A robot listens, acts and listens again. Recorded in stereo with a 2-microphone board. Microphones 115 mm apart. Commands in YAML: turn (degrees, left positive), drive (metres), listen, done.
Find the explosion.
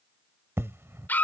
turn: -20
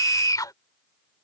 listen: true
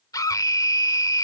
done: "I heard an explosion, but can't make it out now. It was about straight ahead or 140° right."